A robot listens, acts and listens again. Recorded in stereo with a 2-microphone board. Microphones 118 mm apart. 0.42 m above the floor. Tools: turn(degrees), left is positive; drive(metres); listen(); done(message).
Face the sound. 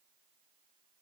listen()
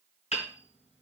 turn(degrees=60)
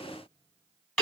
done("Found it: hammering, straight ahead, 2 to 4 m away.")